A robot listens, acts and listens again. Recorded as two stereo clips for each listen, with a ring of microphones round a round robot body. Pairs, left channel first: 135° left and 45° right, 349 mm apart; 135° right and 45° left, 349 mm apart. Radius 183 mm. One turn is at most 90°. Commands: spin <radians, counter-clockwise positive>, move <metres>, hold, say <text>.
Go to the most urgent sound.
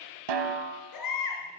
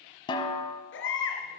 spin 1.57
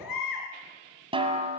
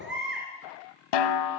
spin 1.57
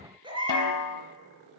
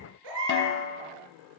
spin 0.52
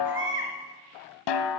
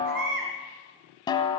spin 0.17
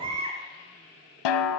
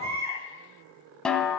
move 1.0
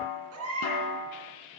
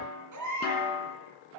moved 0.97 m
move 1.0
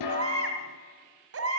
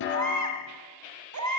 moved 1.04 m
move 1.0
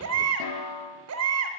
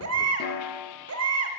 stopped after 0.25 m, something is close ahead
say I am next to the baby crying.